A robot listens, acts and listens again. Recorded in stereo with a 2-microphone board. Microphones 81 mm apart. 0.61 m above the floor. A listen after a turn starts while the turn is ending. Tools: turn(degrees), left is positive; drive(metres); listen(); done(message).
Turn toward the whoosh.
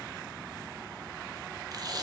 listen()
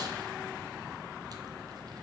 listen()
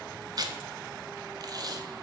done("I can't make out a whoosh, only tape being pulled.")